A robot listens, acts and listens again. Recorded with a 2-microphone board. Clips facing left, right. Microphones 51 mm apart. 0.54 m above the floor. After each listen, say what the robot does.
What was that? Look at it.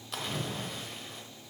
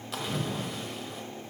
Turn 30° right.
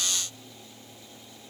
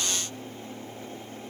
Keep listening.
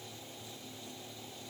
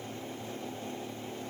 I heard a splash, but can't make it out now. It was about 25° left or 145° right.